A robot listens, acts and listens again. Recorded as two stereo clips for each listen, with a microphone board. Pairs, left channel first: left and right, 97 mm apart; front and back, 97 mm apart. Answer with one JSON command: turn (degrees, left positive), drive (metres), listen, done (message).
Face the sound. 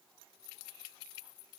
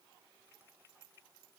{"listen": true}
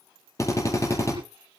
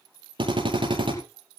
{"turn": 145}
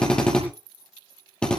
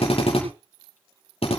{"turn": 10}
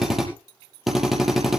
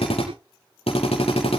{"done": "Facing the drill."}